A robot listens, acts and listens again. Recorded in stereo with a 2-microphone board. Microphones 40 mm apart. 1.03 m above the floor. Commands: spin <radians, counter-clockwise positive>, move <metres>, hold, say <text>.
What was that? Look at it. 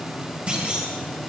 spin -0.52
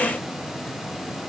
hold
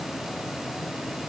say I heard a clunk, but can't make it out now. It was about straight ahead or 120° right.